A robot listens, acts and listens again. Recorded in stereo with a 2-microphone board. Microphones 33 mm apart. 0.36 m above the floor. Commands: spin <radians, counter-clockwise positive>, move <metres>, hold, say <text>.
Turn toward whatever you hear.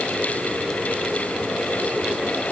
hold
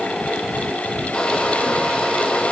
spin 0.44
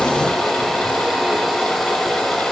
say Found it: a hair dryer, straight ahead.